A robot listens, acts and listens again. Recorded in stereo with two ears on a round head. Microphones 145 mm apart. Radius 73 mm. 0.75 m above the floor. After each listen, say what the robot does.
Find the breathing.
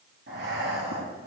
Turn 65° right.
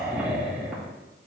Found it: breathing, straight ahead, 2 to 4 m away.